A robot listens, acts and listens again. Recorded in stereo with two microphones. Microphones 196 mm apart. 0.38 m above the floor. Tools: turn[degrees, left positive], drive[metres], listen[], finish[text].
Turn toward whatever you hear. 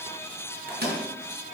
Thought: The microwave: about 55° right or 125° right.
Action: turn[-55]
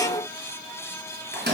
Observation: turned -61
Thought: So it is at 60° right.
Action: turn[-60]
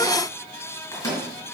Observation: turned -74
Thought: The microwave is now 15° left.
Action: turn[15]
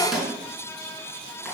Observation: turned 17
Action: finish[Facing the microwave, 2 to 4 m away.]